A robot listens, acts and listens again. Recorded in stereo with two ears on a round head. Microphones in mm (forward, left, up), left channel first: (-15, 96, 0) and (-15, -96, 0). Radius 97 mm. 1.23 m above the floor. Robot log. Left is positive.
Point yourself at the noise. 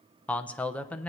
cmd yaw +30
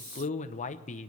note: So it is at 145° left.
cmd yaw +145
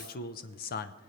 note: The man speaking is now 45° left.
cmd yaw +45
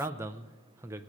note: The man speaking is now 15° right.
cmd yaw -15
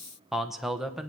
end: Found it: a man speaking, straight ahead, under 1 m away.